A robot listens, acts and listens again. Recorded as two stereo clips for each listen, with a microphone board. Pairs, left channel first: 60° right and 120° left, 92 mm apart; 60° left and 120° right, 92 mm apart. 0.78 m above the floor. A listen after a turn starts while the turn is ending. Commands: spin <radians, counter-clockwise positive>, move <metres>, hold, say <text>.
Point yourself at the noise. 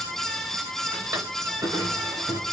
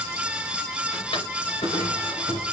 spin 1.13
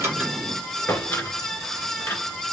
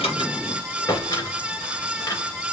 spin 0.17
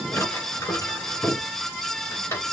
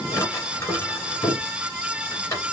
say Facing the drawer, 2 to 4 m away.